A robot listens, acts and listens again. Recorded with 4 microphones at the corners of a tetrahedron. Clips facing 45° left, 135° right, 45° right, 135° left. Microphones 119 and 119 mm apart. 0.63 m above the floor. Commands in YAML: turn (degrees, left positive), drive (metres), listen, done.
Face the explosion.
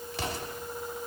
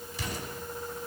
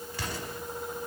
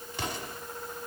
turn: 65
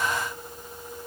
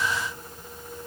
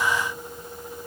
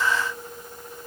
done: "I heard an explosion from this way, but can't make it out now."